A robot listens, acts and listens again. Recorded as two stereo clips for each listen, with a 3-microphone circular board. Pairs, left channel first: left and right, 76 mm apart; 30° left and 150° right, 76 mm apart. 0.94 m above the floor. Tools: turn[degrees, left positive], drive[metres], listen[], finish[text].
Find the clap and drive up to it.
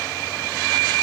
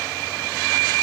Action: listen[]
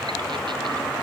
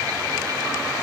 Action: listen[]
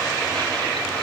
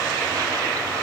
Action: finish[I can't make out a clap to turn to.]